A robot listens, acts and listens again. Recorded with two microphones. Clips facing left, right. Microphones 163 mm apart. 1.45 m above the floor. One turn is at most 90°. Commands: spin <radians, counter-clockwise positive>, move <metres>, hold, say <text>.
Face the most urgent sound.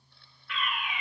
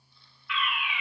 spin 0.70
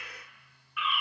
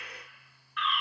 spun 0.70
spin 0.17
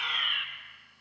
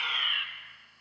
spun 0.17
say Found it: a fire alarm, straight ahead, 1 to 2 m away.